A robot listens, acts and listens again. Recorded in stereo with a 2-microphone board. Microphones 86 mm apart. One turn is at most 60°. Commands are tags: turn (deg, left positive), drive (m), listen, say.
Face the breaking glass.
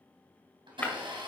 <turn deg="20"/>
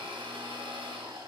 <listen/>
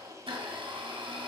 <say>I heard breaking glass, but can't make it out now. It was about straight ahead or 140° left.</say>